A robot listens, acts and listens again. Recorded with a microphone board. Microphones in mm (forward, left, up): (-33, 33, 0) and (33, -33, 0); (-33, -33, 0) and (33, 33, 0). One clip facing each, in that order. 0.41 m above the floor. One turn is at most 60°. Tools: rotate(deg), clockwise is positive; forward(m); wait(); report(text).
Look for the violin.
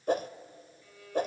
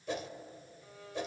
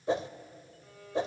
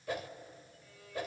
rotate(60)
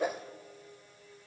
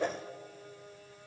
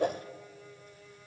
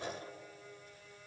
rotate(50)
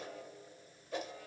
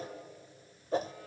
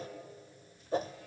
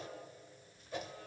wait()
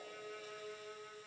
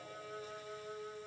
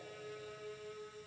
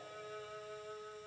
report("Found it: a violin, straight ahead, 2 to 4 m away.")